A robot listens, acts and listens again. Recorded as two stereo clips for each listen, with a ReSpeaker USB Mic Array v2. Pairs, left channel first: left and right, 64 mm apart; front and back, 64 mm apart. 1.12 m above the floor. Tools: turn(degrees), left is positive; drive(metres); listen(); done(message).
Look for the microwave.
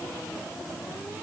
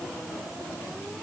listen()
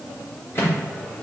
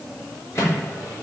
turn(degrees=40)
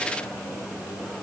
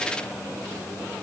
listen()
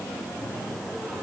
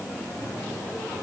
listen()
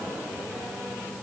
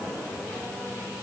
done("Facing where the microwave came from. I can't hear it now.")